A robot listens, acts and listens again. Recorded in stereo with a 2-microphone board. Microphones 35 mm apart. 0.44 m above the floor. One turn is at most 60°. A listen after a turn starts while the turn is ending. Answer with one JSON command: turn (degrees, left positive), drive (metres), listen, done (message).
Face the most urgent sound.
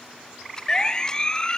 {"turn": 20}
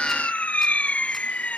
{"turn": 60}
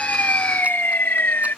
{"turn": 60}
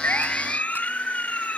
{"turn": 45}
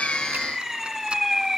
{"turn": -10}
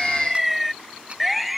{"done": "Found it: a siren, straight ahead."}